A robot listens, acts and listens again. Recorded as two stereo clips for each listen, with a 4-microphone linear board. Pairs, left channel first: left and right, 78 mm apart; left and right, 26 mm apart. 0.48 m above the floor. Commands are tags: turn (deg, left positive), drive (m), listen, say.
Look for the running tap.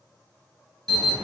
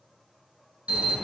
<listen/>
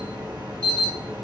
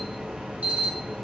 <listen/>
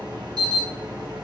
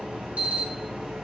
<say>I can't make out a running tap to turn to.</say>